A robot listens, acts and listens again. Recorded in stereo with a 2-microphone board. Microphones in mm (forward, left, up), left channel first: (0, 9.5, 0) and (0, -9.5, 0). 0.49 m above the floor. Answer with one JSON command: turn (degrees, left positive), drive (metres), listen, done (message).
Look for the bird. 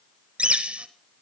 {"turn": -70}
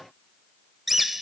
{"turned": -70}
{"done": "Facing the bird, 1 to 2 m away."}